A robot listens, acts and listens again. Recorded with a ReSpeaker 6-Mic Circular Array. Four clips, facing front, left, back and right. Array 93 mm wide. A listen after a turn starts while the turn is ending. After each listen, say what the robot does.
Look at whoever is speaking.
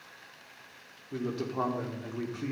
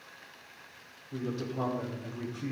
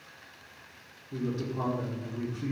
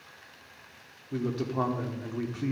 Turn 60° right.
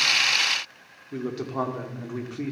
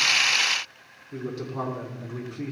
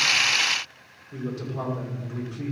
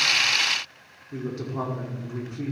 Found it: a man speaking, straight ahead, 1 to 2 m away.